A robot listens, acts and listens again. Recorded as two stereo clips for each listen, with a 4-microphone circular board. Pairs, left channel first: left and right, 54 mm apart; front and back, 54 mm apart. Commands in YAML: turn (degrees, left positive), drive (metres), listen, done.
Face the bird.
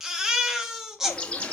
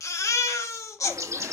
turn: 160
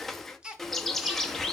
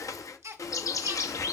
done: "Facing the bird."